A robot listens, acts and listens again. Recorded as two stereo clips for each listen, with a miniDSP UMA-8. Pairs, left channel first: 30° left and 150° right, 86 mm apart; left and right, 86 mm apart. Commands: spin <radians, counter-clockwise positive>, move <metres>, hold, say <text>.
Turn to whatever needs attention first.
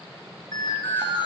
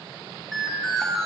say Found it: an alarm, straight ahead, over 4 m away.